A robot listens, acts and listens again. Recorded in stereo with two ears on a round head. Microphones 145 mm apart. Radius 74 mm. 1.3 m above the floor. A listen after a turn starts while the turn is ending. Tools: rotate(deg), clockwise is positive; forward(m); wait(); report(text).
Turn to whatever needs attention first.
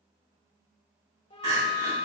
rotate(20)
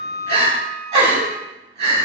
rotate(140)
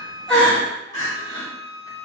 rotate(-20)
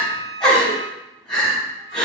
report("Found it: crying, straight ahead.")